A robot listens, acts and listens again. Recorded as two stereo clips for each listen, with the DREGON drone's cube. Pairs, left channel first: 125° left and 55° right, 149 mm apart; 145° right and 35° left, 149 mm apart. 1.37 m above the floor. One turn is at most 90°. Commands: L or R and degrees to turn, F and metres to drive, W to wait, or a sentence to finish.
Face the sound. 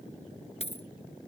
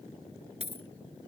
L80
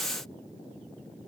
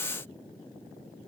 I heard a dropped coin from this way, but can't make it out now.